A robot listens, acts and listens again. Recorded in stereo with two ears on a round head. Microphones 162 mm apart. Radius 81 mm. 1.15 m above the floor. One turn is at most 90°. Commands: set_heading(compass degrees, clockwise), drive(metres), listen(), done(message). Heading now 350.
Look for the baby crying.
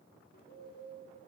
listen()
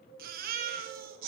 set_heading(40)
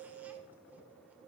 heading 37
listen()
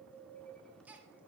set_heading(47)
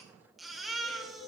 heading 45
done("Facing the baby crying.")